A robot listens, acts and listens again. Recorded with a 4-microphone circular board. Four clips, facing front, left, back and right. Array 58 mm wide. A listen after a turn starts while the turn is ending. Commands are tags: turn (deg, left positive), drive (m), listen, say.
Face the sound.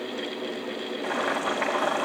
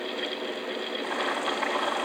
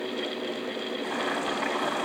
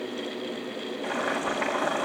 <turn deg="-35"/>
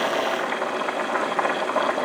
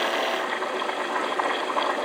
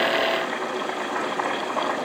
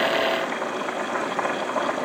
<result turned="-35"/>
<turn deg="-20"/>
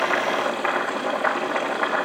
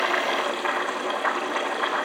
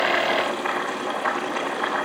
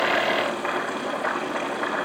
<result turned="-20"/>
<say>Facing the boiling, over 4 m away.</say>